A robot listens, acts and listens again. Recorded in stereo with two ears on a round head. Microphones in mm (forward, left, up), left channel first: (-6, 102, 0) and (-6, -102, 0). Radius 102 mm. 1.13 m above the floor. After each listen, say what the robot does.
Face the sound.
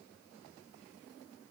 Keep listening.
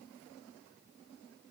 Keep listening.
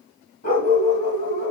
Turn 40° left.
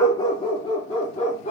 Turn 30° left.
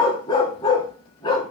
Turn 20° left.
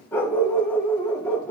Turn 10° left.
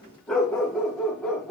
Facing the dog barking, 1 to 2 m away.